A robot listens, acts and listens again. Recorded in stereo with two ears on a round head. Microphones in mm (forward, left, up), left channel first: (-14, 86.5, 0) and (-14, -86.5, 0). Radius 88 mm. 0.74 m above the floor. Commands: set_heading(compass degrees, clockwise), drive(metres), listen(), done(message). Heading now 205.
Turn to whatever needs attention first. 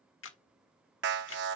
set_heading(260)
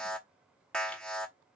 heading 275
done("Facing the alarm.")